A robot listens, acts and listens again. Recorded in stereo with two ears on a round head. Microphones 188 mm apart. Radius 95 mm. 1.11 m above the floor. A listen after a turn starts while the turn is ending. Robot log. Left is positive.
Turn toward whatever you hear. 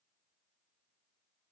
cmd idle
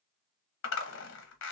note: The zipper: about 60° left or 120° left.
cmd yaw +60
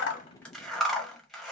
end: Facing the zipper.